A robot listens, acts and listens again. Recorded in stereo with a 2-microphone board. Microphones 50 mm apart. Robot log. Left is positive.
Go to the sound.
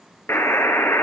note: The buzzer: about 65° left or 115° left.
cmd yaw +65
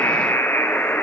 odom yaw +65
note: So it is at 50° left.
cmd yaw +50
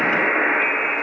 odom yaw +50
cmd fwd 1.0
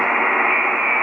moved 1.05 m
cmd fwd 1.0
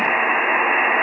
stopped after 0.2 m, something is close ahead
end: Arrived at the buzzer, straight ahead.